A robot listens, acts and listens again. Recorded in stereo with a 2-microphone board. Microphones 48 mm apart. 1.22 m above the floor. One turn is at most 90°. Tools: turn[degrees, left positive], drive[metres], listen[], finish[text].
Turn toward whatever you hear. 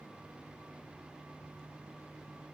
Action: listen[]
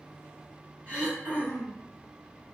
Thought: The throat clearing: about 30° right or 150° right.
Action: turn[-30]
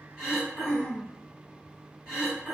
Action: finish[Facing the throat clearing, 1 to 2 m away.]